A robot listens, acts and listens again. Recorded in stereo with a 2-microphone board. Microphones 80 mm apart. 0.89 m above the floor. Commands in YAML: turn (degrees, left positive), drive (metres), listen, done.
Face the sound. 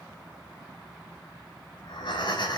turn: 70
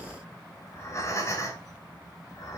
turn: 40
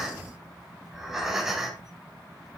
done: "Found it: breathing, straight ahead."